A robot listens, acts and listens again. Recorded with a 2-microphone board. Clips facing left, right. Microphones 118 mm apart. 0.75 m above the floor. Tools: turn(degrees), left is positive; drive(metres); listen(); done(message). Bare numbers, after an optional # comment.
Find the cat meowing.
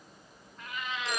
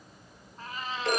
# The cat meowing: about 40° right or 140° right.
turn(-40)
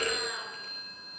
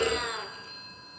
# So it is at 105° right.
turn(-105)
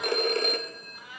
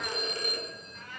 # The cat meowing is now 10° left.
turn(10)
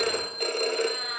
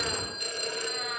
done("Found it: a cat meowing, straight ahead, over 4 m away.")